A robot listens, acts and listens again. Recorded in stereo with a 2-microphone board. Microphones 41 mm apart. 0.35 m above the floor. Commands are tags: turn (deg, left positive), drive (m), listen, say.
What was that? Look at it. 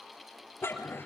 <turn deg="90"/>
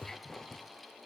<turn deg="10"/>
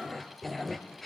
<say>Found it: a dog barking, straight ahead, 2 to 4 m away.</say>